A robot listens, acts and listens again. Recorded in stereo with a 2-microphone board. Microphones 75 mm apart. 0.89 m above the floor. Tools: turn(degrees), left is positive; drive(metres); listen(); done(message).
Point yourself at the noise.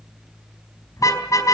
turn(degrees=50)
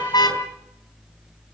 turn(degrees=80)
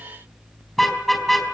done("Facing the car horn, 2 to 4 m away.")